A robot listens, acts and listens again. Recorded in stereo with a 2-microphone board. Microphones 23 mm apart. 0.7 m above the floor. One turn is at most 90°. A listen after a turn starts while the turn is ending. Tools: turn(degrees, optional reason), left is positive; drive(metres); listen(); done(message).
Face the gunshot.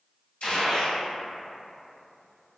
turn(degrees=70, reason="The gunshot: about 70° left or 110° left.")
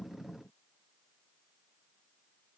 listen()
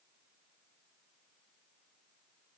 done("I heard a gunshot, but can't make it out now. It was about straight ahead or 40° left.")